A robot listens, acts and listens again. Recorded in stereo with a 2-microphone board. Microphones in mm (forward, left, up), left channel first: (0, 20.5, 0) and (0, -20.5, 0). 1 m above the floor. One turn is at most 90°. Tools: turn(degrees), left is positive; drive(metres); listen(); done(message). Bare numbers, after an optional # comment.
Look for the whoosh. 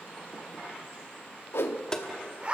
turn(90)
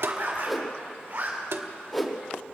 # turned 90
done("Facing the whoosh.")